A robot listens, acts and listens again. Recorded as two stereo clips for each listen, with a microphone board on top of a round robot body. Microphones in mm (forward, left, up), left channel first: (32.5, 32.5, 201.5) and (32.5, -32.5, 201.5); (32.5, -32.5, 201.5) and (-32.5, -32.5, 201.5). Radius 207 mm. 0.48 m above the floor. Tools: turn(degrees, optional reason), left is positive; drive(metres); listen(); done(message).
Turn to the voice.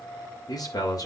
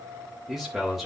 turn(degrees=95, reason="The man speaking: 95° left.")
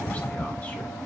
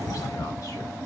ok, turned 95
listen()
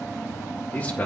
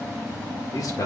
turn(degrees=30, reason="The man speaking is now 30° left.")
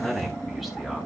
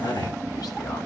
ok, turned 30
done("Found it: a man speaking, straight ahead, 2 to 4 m away.")